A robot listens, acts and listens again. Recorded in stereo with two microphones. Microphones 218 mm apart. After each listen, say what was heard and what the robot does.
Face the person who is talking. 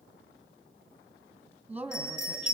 Turn 30° right.
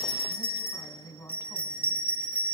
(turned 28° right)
So it is at 20° left. Turn 20° left.
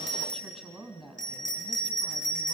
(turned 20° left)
Facing the woman speaking, 2 to 4 m away.